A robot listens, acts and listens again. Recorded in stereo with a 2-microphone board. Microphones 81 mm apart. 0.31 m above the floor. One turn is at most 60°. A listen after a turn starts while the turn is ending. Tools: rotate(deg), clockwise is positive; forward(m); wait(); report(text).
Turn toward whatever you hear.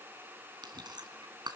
rotate(60)
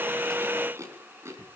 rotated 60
rotate(40)
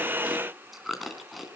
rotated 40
report("Facing the chewing, 2 to 4 m away.")